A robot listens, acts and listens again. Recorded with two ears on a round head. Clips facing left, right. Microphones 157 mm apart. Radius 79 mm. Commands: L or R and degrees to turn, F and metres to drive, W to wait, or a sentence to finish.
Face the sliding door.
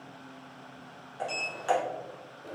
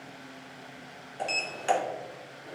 R25
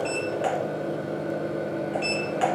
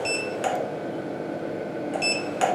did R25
R125
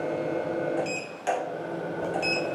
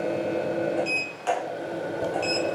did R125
L10
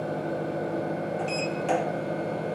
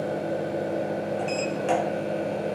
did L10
W
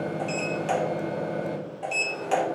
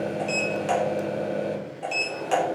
Facing the sliding door.